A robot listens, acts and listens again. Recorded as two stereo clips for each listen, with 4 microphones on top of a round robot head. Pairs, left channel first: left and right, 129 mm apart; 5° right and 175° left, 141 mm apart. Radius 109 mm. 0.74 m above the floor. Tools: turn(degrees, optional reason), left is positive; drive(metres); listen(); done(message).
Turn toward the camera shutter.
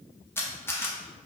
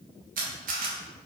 turn(degrees=165, reason="The camera shutter: 165° left.")
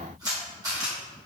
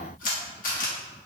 turn(degrees=-25, reason="The camera shutter is now 25° right.")
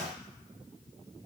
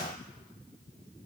listen()
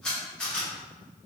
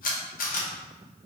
done("Facing the camera shutter.")